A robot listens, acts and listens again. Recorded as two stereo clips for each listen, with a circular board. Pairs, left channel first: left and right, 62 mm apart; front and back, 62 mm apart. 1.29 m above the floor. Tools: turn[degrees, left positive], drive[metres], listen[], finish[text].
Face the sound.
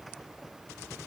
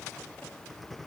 Action: listen[]
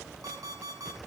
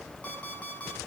Thought: The alarm clock: 65° right.
Action: turn[-65]
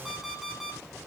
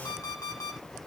Action: finish[Found it: an alarm clock, straight ahead.]